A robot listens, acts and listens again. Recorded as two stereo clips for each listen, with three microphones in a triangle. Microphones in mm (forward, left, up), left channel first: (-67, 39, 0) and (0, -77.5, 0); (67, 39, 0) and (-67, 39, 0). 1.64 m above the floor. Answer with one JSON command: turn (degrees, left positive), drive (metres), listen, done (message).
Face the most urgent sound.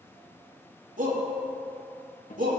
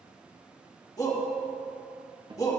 {"turn": -65}
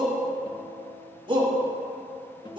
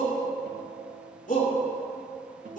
{"turn": -10}
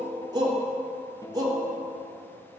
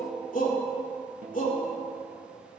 {"done": "Found it: a shout, straight ahead."}